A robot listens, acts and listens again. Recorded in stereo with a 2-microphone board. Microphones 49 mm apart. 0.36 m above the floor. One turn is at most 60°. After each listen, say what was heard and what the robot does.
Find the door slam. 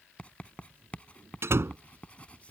The door slam: about 60° right or 120° right. Turn 60° right.
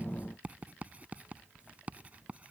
Keep listening.
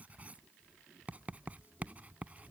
I heard a door slam, but can't make it out now. It was about straight ahead or 60° right.